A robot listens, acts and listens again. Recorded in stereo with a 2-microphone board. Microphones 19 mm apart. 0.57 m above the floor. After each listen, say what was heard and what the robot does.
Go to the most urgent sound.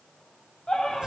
The scream: about 65° left or 115° left. Turn 65° left.
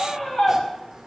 So it is at 45° left. Turn 45° left.
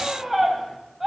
Drive 1.0 m forward.
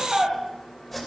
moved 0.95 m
The scream is now 10° right. Turn 10° right.
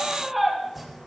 Drive 1.0 m forward.
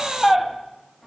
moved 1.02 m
Drive 1.0 m forward.
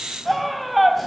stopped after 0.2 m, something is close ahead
Arrived at the scream, straight ahead.